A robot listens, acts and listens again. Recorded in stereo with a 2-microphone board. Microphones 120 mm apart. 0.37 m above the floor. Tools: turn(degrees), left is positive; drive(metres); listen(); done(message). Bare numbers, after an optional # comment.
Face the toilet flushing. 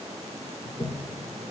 # The toilet flushing: about 60° left or 120° left.
turn(60)
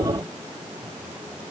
listen()
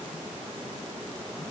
listen()
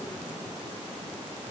done("I heard a toilet flushing, but can't make it out now. It was about straight ahead or 60° left.")